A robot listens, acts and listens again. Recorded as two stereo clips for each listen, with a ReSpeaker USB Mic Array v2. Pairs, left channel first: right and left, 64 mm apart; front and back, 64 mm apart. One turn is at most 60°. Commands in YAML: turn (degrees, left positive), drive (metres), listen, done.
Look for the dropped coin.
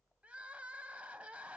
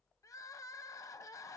listen: true
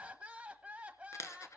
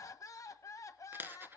turn: -60
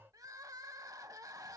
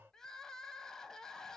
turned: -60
turn: -60
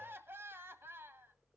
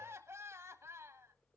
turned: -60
done: "Facing where the dropped coin came from. I can't hear it now."